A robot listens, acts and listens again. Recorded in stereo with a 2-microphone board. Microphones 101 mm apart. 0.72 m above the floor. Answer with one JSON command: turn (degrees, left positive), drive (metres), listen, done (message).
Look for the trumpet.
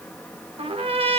{"turn": -75}
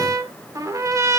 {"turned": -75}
{"turn": -30}
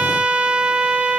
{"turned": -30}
{"turn": -10}
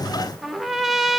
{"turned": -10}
{"done": "Facing the trumpet, under 1 m away."}